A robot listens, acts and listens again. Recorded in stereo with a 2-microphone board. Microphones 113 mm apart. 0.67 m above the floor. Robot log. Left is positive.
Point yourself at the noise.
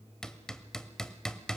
cmd yaw +30
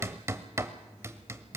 note: So it is at 25° right.
cmd yaw -25
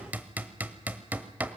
note: The hammering is now 15° right.
cmd yaw -15
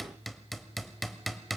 end: Found it: hammering, straight ahead.